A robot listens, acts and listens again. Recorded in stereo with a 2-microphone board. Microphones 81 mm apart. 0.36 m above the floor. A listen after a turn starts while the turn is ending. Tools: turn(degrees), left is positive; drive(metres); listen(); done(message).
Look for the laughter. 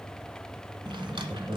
turn(degrees=-30)
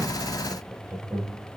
turn(degrees=-30)
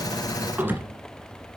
listen()
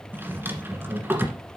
turn(degrees=-35)
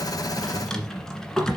listen()
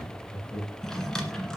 turn(degrees=-10)
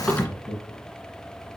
done("Facing the laughter, 2 to 4 m away.")